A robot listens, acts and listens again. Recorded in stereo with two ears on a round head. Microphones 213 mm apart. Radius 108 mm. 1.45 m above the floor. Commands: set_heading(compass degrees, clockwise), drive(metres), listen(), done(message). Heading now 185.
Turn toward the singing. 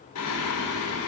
set_heading(115)
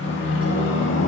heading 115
set_heading(60)
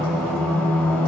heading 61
done("Facing the singing, 2 to 4 m away.")